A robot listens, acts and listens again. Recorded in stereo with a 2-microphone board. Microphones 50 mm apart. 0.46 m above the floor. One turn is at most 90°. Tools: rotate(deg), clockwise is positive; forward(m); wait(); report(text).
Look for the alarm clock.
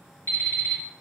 rotate(-60)
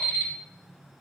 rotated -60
rotate(-60)
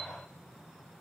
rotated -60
wait()
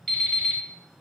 report("Facing the alarm clock, 1 to 2 m away.")